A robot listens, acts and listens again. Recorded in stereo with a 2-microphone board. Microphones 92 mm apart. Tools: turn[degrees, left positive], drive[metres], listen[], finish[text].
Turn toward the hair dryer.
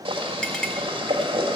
Action: listen[]
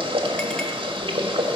Action: listen[]
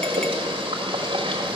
Action: finish[I can't make out a hair dryer, only a clink and boiling.]